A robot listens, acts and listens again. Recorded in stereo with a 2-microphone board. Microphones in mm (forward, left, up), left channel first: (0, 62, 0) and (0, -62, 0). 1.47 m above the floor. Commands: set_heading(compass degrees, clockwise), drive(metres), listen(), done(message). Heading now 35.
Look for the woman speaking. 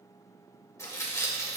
listen()
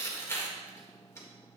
listen()
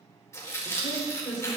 set_heading(0)
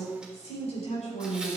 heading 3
set_heading(253)
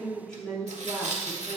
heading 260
done("Found it: a woman speaking, straight ahead, over 4 m away.")